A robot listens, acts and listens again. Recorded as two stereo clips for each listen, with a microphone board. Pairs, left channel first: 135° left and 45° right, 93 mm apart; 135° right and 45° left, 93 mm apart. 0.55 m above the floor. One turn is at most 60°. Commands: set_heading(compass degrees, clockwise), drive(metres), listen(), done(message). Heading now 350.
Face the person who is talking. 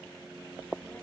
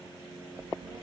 set_heading(290)
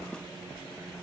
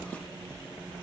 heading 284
done("Found it: a child speaking, straight ahead, over 4 m away.")